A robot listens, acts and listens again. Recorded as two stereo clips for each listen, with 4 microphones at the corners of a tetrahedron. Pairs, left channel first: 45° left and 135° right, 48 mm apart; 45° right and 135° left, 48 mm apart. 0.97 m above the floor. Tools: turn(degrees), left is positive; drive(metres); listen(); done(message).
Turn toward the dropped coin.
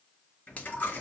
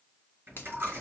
turn(degrees=95)
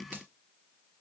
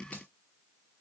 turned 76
turn(degrees=20)
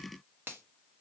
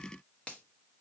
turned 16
done("I heard a dropped coin from this way, but can't make it out now.")